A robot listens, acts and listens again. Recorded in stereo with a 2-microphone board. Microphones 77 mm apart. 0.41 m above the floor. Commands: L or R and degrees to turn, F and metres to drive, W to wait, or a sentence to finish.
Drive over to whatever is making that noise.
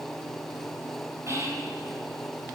R35
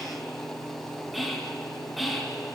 F1.0
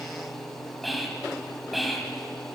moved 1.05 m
F1.0
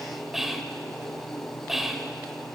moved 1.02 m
F1.0
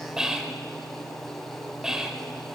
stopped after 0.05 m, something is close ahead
R10
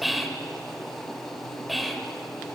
Arrived at the whispering, straight ahead.